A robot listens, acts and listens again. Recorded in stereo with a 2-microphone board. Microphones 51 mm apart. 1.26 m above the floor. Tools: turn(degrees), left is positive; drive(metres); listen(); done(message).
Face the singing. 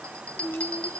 turn(degrees=55)
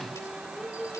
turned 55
done("Facing the singing.")